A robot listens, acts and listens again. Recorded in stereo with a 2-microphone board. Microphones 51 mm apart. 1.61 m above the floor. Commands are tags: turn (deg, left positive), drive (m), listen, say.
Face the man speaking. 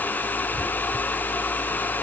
<listen/>
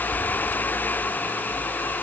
<listen/>
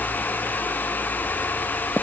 <say>I can't make out a man speaking.</say>